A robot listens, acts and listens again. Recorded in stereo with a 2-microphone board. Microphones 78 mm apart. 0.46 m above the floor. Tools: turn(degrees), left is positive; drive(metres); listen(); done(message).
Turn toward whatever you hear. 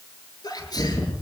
turn(degrees=60)
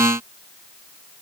listen()
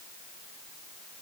done("I heard a sneeze, but can't make it out now. It was about straight ahead or 60° left.")